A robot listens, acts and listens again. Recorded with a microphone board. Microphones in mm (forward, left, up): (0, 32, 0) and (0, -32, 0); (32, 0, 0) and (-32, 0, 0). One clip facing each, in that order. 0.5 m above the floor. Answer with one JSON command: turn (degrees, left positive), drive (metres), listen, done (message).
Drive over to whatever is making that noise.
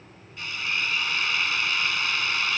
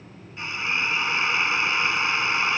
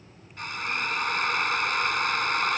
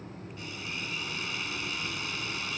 {"turn": -30}
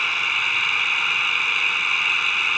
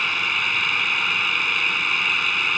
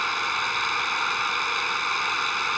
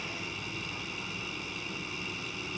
{"drive": 1.0}
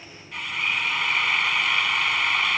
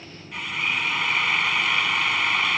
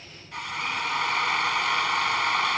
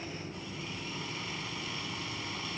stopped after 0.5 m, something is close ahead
{"done": "Something is in my way. I am facing the drill but have not reached it."}